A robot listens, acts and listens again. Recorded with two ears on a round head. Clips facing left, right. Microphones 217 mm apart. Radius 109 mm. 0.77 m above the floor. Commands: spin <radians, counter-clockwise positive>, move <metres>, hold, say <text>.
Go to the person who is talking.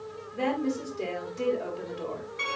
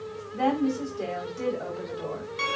spin -0.26
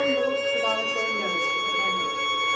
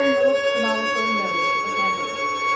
hold
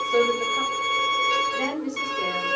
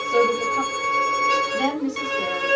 spin -2.71
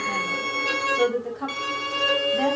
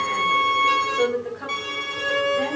spin 0.52
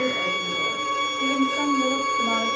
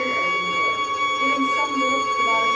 hold
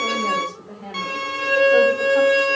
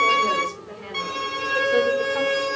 move 1.0
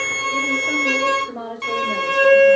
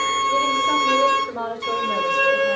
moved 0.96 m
move 1.0
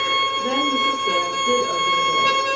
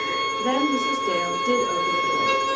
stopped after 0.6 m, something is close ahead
hold
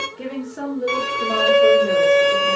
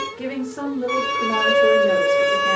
say Something is in my way. I am facing the woman speaking but have not reached it.